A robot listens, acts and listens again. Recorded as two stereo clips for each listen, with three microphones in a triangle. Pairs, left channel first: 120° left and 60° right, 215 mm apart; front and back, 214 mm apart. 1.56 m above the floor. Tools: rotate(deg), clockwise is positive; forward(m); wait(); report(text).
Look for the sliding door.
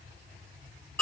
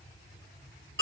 wait()
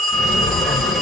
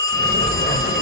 rotate(-30)
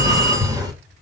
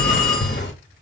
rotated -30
rotate(-10)
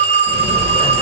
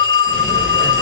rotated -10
report("Found it: a sliding door, straight ahead.")